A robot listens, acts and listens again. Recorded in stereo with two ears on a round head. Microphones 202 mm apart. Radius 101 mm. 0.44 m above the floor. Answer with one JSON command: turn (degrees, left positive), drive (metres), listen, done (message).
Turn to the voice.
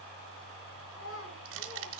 {"turn": 60}
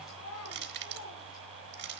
{"turn": 75}
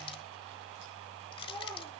{"turn": 20}
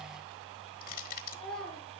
{"done": "Facing the child speaking, over 4 m away."}